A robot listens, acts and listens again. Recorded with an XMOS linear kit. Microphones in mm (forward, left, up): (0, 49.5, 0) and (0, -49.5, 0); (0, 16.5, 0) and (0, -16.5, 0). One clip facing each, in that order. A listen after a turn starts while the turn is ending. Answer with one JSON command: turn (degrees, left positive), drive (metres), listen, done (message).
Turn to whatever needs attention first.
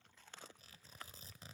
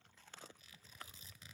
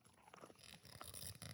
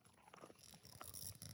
{"listen": true}
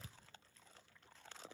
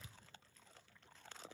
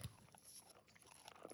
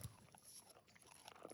{"listen": true}
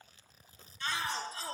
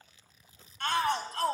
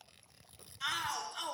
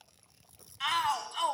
{"turn": -60}
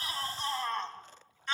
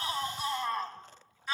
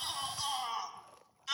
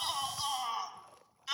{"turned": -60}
{"done": "Facing the shout, 2 to 4 m away."}